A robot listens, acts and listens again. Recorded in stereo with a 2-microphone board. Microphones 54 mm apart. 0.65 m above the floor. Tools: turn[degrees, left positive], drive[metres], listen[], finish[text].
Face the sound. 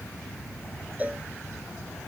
Thought: The cowbell: about 30° right or 150° right.
Action: turn[-30]
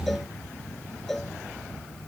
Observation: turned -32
Action: finish[Facing the cowbell.]